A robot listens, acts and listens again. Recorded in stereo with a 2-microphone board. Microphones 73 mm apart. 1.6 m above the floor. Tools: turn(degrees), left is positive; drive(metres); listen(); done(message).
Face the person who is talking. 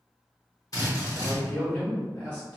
turn(degrees=30)
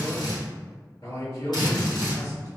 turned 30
turn(degrees=135)
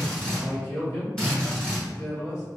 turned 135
turn(degrees=50)
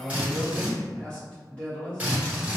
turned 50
turn(degrees=20)
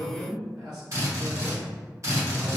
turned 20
done("Found it: a man speaking, straight ahead, 1 to 2 m away.")